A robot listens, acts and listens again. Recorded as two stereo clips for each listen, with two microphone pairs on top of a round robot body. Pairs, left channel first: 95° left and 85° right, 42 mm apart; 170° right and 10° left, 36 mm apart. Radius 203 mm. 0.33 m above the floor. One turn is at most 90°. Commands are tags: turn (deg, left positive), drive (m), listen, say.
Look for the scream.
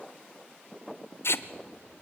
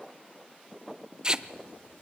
<listen/>
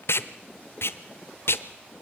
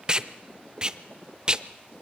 <listen/>
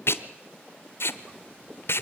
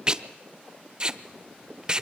<say>I can't make out a scream to turn to.</say>